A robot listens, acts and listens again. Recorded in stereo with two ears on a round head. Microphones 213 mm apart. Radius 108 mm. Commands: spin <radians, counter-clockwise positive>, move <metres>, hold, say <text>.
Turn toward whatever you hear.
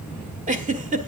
spin -0.61
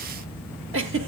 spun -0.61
spin -1.83
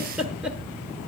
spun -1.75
say Found it: a giggle, straight ahead.